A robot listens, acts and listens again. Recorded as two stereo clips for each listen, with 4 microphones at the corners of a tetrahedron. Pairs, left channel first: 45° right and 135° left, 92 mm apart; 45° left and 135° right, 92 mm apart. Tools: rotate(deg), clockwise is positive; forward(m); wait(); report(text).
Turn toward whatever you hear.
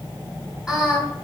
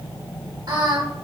rotate(155)
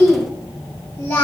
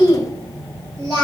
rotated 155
rotate(100)
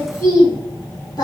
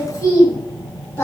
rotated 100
rotate(10)
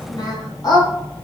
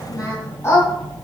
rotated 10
rotate(10)
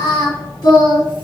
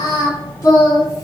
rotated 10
rotate(10)
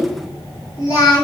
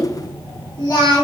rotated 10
report("Facing the singing.")